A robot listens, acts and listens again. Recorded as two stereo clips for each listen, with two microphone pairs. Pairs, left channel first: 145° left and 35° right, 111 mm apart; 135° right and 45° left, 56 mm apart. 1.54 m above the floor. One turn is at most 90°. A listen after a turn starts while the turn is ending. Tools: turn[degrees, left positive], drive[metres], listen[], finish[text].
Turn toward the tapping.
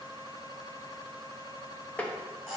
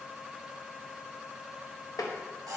Thought: The tapping: 135° right.
Action: turn[-90]
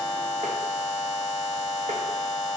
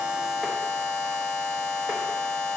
Thought: Nothing new. It was at 45° right.
Action: turn[-45]
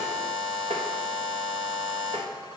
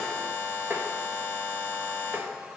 Action: listen[]
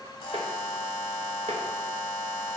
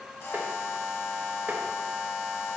Action: finish[Facing where the tapping came from. I can't hear it now.]